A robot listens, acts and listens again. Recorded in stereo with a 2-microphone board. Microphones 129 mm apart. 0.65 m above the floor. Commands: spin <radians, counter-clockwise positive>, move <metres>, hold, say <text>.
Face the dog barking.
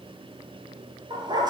spin -0.61
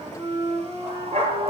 spin -2.27
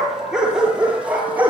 spin -0.26
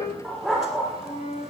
say Facing the dog barking.